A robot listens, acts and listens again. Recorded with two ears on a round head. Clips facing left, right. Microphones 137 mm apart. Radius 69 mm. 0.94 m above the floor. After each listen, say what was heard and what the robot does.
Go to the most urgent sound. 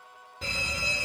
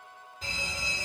The fire alarm: about 55° left or 125° left. Turn 55° left.
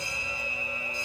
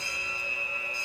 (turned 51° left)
So it is at 25° left. Turn 25° left.
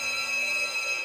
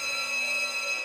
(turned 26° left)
Drive 1.0 m forward.
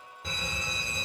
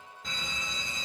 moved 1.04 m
Drive 1.0 m forward.
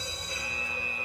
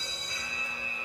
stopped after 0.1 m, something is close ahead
Arrived at the fire alarm, straight ahead.